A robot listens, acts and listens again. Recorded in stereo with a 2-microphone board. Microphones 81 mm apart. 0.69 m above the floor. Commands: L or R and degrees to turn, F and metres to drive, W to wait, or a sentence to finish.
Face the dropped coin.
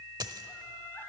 R55
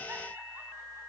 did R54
W
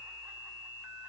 I heard a dropped coin, but can't make it out now. It was about straight ahead or 70° right.